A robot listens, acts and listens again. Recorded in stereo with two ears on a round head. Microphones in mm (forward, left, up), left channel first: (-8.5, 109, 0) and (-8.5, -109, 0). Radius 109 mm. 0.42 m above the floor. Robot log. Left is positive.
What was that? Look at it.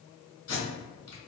note: The tape being pulled: about 65° left or 115° left.
cmd yaw +65
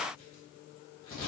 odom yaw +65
note: So it is at 20° left.
cmd yaw +20
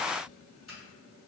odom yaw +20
cmd idle
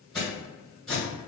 end: Facing the tape being pulled, 1 to 2 m away.